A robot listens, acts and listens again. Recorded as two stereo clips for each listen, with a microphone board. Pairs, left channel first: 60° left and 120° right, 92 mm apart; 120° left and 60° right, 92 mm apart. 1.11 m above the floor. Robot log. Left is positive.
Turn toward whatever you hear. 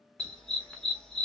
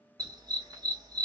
note: The dog barking: 20° right.
cmd yaw -20
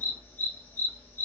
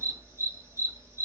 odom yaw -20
end: Facing the dog barking, 1 to 2 m away.